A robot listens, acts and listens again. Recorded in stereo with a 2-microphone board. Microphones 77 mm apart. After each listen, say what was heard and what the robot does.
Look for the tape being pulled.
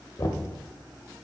Keep listening.
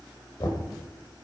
Keep listening.
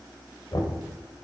I can't make out tape being pulled to turn to.